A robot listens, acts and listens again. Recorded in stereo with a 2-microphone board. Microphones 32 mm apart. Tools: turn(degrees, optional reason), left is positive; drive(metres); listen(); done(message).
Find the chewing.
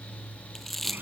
turn(degrees=30)
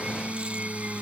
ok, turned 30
listen()
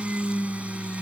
listen()
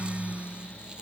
done("I heard chewing, but can't make it out now. It was about 25° right or 145° left.")